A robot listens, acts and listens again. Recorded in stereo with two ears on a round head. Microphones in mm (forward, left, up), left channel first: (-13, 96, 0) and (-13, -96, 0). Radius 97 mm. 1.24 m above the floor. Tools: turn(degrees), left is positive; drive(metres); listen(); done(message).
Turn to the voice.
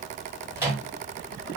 listen()
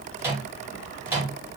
listen()
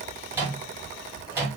done("I can't make out anyone speaking to turn to.")